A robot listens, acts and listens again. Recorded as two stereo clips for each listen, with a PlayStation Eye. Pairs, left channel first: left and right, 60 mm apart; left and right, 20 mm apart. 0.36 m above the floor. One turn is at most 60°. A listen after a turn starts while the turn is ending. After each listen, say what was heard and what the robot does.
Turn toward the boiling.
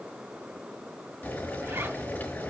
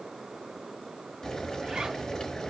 The boiling: about 30° left or 150° left. Turn 30° left.
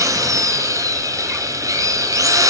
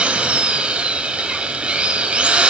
Keep listening.
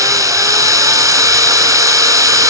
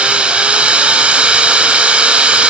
Keep listening.
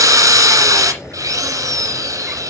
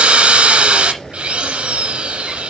So it is at 120° left. Turn 60° left.
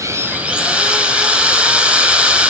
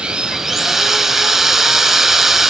Nothing new. It was at 60° left. Turn 60° left.
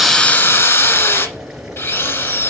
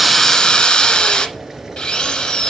Facing the boiling, over 4 m away.